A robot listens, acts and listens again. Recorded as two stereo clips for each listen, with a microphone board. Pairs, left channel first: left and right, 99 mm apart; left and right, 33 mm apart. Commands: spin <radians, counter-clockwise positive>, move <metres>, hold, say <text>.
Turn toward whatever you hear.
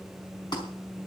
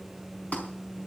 spin 0.87
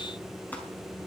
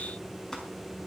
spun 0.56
hold
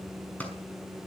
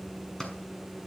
spin 0.26
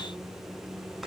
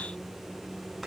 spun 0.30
hold
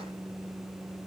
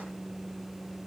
hold
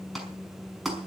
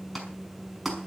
say Facing the clap, over 4 m away.